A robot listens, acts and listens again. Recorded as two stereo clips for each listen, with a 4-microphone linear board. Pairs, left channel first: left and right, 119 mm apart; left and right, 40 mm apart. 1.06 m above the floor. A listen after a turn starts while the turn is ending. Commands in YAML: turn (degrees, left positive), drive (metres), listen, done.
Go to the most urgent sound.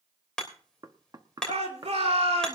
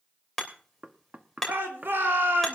turn: -60
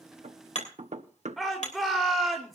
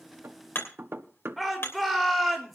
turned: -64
drive: 1.0
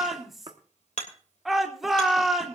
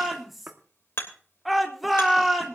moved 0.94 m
drive: 1.0
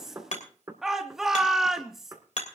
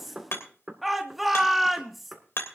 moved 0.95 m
drive: 1.0
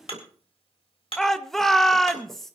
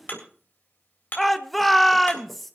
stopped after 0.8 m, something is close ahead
done: "Arrived at the shout, straight ahead."